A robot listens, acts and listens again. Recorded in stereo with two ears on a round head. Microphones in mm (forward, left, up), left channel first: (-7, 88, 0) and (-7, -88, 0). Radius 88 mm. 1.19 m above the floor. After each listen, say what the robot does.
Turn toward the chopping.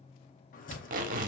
Turn 45° left.
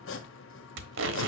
Turn 90° left.
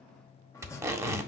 Turn 15° left.
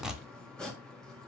Found it: chopping, straight ahead, 1 to 2 m away.